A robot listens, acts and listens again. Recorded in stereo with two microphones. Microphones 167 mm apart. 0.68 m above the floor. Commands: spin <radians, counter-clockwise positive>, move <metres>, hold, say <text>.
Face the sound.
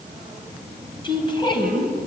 spin 0.44
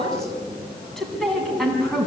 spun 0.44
say Found it: a woman speaking, straight ahead.